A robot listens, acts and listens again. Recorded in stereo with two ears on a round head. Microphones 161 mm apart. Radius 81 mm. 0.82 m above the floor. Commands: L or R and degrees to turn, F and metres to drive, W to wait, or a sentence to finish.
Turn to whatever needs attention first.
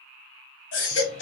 L70
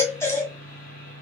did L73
L15
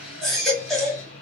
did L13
Facing the baby crying, 1 to 2 m away.